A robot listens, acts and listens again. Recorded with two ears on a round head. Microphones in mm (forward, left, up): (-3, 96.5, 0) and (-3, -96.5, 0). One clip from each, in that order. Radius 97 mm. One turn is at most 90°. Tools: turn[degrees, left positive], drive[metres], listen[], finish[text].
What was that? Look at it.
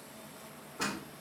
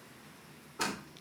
Thought: The door slam: about 40° right or 140° right.
Action: turn[-40]
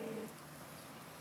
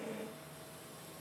Action: listen[]
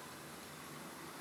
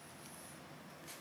Action: finish[I heard a door slam, but can't make it out now. It was about straight ahead or 100° right.]